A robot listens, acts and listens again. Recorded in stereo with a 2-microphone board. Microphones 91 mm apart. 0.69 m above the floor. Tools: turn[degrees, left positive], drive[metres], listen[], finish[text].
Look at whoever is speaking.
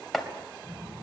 Thought: The child speaking: about 65° right or 115° right.
Action: turn[-65]
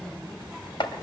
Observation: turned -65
Action: finish[Facing the child speaking.]